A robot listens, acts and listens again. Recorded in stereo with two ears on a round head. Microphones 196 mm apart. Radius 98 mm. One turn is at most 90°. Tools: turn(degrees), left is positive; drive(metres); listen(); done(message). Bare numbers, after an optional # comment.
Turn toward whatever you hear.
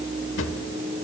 # The drawer: about 65° left or 115° left.
turn(65)
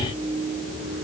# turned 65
listen()
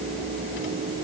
listen()
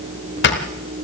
# So it is at 50° left.
turn(50)
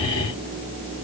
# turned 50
listen()
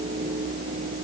listen()
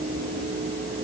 done("I heard a drawer from this way, but can't make it out now.")